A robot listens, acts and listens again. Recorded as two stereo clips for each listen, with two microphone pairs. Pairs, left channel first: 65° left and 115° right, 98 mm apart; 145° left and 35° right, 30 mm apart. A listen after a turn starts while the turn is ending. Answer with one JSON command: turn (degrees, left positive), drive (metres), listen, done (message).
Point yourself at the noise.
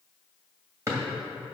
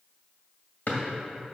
{"turn": -175}
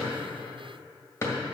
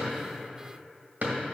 {"done": "Found it: a drawer, straight ahead."}